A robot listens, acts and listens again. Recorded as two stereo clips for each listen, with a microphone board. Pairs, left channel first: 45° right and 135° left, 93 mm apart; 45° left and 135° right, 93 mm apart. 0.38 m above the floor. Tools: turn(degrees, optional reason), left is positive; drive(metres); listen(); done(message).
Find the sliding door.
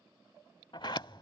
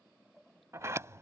turn(degrees=-75, reason="The sliding door: 75° right.")
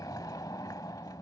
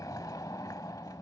done("Found it: a sliding door, straight ahead.")